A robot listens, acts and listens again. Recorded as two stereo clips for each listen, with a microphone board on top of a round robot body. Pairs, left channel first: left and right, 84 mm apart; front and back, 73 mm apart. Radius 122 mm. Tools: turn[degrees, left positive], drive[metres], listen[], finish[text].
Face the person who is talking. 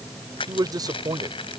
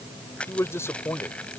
Thought: The man speaking: 55° right.
Action: turn[-55]
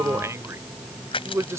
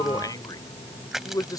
Thought: The man speaking is now 35° right.
Action: turn[-35]
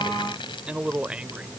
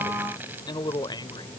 Thought: The man speaking is now 15° right.
Action: turn[-15]
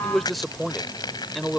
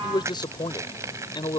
Action: finish[Found it: a man speaking, straight ahead.]